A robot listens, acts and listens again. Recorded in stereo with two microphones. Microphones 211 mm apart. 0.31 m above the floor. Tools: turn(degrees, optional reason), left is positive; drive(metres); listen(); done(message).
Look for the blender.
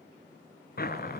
listen()
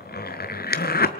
listen()
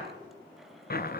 done("I can't make out a blender to turn to.")